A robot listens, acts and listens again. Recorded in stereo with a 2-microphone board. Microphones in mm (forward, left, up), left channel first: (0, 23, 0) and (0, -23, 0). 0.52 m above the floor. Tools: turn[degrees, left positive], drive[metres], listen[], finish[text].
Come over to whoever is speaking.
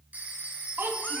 Thought: The child speaking: about 55° right or 125° right.
Action: turn[-55]
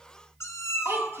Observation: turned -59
Thought: So it is at 65° right.
Action: turn[-65]
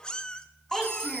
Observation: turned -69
Action: drive[1.0]
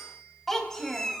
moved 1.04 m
Action: drive[1.0]
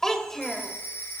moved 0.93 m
Thought: The child speaking is now 10° left.
Action: turn[10]
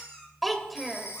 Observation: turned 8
Action: drive[1.0]
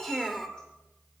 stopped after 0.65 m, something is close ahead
Action: finish[I am next to the child speaking.]